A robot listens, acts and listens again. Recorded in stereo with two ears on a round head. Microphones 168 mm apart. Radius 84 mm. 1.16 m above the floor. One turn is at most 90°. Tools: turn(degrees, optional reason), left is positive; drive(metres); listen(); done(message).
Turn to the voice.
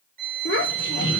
turn(degrees=60, reason="The child speaking: about 60° left or 120° left.")
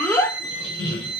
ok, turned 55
turn(degrees=10, reason="So it is at 10° left.")
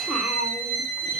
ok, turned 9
done("Found it: a child speaking, straight ahead, 1 to 2 m away.")